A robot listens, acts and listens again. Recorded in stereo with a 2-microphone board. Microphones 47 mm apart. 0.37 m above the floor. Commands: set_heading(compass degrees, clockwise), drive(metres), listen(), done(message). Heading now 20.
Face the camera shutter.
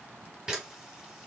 set_heading(35)
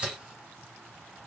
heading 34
set_heading(184)
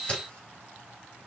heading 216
set_heading(186)
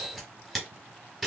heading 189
done("Facing the camera shutter, 1 to 2 m away.")